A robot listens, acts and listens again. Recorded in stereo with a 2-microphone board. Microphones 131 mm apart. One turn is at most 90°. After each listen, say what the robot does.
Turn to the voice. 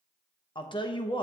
Turn 35° left.
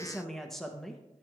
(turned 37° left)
Facing the woman speaking, under 1 m away.